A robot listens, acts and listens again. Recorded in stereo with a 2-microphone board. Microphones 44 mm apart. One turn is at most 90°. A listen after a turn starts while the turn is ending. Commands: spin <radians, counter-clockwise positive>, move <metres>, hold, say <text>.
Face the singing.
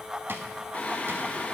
spin 0.61
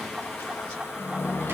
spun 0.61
spin 1.57
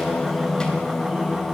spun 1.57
spin 0.26
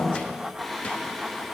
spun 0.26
say Found it: singing, straight ahead, under 1 m away.